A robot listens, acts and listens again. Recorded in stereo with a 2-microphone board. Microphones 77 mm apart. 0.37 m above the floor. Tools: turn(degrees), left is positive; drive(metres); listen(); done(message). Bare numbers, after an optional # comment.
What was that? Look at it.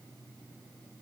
listen()
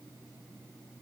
listen()
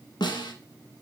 # The snare drum: about 75° left or 105° left.
turn(75)
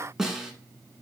done("Facing the snare drum.")